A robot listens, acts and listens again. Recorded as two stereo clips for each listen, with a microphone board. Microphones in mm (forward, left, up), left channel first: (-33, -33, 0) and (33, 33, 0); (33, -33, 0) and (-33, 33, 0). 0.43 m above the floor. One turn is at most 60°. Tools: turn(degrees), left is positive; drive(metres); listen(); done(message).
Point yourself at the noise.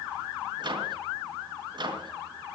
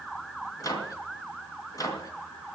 turn(degrees=10)
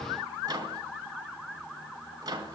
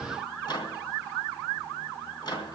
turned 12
done("Found it: a microwave, straight ahead.")